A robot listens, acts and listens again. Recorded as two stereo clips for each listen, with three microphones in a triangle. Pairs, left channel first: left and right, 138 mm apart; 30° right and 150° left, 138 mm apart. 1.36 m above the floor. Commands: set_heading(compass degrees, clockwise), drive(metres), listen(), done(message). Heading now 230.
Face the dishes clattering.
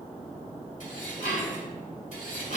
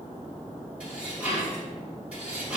set_heading(160)
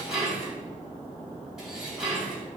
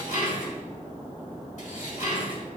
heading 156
done("Found it: dishes clattering, straight ahead, 2 to 4 m away.")